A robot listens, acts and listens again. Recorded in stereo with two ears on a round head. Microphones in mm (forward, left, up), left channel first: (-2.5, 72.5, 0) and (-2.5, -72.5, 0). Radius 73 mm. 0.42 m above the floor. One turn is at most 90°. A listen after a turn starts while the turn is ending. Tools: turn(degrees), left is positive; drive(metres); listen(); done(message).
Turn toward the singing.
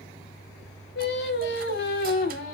turn(degrees=65)
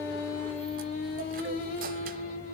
turn(degrees=50)
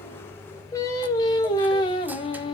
turn(degrees=30)
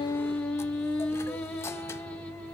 done("Found it: singing, straight ahead, 1 to 2 m away.")